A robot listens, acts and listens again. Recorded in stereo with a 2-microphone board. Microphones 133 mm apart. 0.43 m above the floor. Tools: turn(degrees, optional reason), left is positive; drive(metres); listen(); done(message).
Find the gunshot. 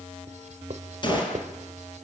turn(degrees=35, reason="The gunshot: about 35° left or 145° left.")
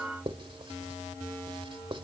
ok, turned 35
listen()
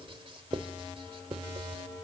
done("I heard a gunshot, but can't make it out now. It was about straight ahead or 110° left.")